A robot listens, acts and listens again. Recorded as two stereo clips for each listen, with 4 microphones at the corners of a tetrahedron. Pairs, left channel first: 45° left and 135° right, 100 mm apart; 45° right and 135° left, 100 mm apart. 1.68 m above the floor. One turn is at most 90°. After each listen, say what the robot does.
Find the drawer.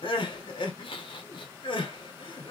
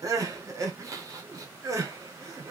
Keep listening.
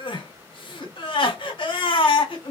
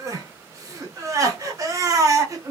Keep listening.
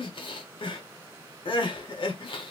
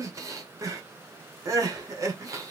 I can't make out a drawer, only crying.